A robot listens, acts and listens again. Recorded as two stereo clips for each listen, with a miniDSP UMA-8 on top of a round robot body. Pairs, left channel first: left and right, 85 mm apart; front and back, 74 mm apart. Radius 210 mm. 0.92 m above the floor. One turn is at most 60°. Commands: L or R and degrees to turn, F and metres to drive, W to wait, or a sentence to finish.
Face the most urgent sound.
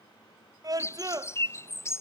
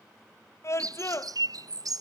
R50
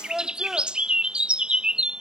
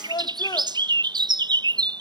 Facing the scream.